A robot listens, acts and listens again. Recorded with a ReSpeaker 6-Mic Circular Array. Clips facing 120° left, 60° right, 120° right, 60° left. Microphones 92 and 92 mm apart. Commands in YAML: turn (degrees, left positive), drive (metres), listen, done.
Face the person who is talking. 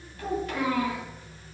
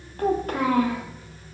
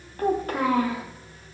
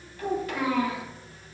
turn: -85
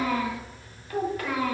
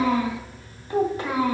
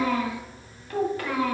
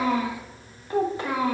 done: "Found it: a child speaking, straight ahead."